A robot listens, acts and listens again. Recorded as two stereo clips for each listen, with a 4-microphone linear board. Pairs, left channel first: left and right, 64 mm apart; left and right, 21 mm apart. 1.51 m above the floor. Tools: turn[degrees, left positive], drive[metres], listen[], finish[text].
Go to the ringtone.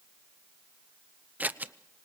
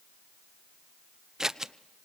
Action: listen[]
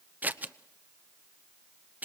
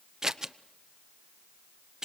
Action: listen[]
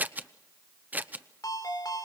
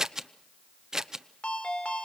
Action: turn[90]
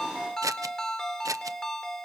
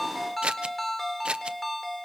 Thought: So it is at 10° left.
Action: turn[10]
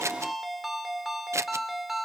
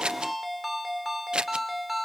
Action: drive[1.0]
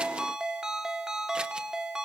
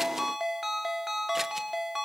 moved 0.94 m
Thought: The ringtone is now 10° right.
Action: turn[-10]
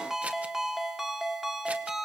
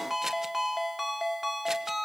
Action: drive[1.0]
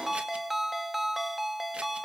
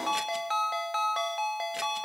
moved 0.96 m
Action: drive[1.0]
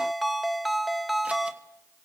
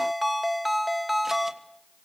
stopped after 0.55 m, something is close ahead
Action: finish[Arrived at the ringtone, straight ahead.]